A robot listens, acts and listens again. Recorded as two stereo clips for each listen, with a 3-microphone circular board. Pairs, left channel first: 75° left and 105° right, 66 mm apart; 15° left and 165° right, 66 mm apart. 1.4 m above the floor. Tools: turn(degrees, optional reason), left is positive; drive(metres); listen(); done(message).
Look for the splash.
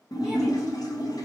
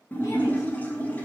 turn(degrees=80, reason="The splash: 80° left.")
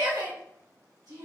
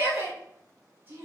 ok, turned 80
done("I heard a splash from this way, but can't make it out now.")